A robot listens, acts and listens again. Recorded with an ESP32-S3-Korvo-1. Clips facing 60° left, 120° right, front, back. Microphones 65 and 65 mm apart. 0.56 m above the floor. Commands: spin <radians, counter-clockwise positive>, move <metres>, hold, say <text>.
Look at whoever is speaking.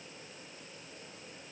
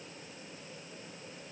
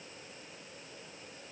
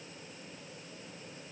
hold
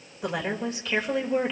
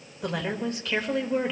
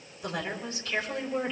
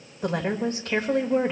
spin 2.53
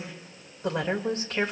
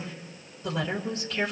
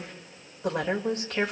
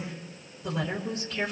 spin 0.35
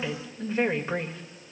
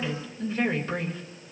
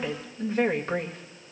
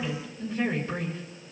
say Facing the woman speaking, 1 to 2 m away.